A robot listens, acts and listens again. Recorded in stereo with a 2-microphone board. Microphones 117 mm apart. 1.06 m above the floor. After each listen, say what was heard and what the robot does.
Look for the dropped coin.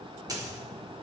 The dropped coin: about 30° right or 150° right. Turn 30° right.
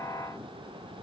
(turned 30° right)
Keep listening.
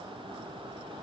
I heard a dropped coin, but can't make it out now. It was about straight ahead or 120° right.